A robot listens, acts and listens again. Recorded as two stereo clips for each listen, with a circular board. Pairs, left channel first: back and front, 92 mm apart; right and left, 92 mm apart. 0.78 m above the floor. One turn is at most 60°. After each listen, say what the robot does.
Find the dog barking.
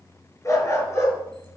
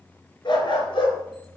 Turn 60° right.
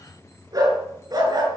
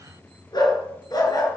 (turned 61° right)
Turn 45° right.
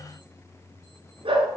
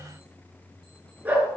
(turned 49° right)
Turn 20° left.
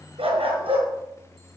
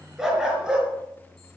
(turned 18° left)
Turn 10° left.
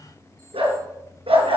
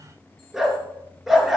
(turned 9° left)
Found it: a dog barking, straight ahead, over 4 m away.